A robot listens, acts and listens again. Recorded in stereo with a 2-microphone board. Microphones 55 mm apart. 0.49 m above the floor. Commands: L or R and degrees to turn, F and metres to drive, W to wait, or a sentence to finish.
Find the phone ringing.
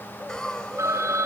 R90
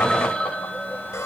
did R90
Facing the phone ringing.